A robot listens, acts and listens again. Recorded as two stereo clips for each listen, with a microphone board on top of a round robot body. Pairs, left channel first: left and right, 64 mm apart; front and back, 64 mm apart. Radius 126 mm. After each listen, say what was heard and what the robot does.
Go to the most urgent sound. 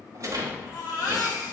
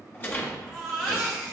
The baby crying: 100° left. Turn 100° left.
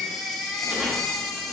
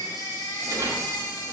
Drive 1.0 m forward.
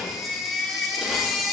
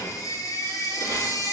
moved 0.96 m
Drive 1.0 m forward.
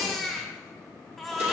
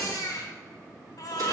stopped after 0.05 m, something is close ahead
Arrived at the baby crying, straight ahead.